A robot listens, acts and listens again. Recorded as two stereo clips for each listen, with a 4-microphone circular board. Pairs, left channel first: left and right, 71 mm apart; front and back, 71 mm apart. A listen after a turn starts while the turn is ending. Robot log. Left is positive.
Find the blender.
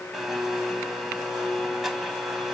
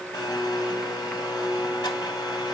end: Found it: a blender, straight ahead.